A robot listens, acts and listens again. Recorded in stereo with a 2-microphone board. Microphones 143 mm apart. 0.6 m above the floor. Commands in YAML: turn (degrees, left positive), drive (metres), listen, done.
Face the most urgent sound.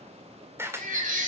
turn: -70
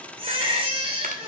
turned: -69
turn: -40
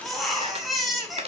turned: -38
done: "Facing the baby crying, 2 to 4 m away."